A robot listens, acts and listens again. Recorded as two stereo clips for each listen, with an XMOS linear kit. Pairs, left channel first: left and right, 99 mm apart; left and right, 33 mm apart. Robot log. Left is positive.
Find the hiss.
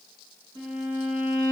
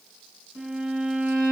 cmd idle
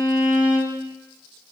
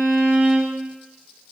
cmd idle
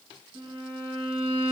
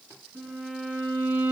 end: I can't make out a hiss to turn to.